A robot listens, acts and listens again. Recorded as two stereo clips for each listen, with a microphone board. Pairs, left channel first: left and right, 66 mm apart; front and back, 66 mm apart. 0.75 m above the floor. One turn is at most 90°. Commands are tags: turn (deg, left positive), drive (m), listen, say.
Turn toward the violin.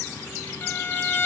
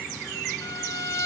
<turn deg="35"/>
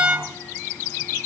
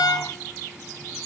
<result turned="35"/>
<turn deg="-10"/>
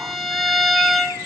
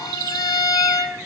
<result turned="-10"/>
<say>Found it: a violin, straight ahead, 1 to 2 m away.</say>